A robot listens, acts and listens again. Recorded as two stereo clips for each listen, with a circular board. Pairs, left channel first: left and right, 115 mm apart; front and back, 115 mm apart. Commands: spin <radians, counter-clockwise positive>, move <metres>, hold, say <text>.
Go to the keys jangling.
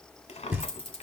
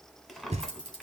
spin 0.96
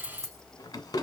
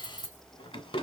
move 1.0
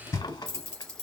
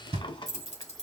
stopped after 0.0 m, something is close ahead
spin 0.17
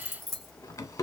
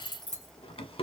say Something is in my way. I am facing the keys jangling but have not reached it.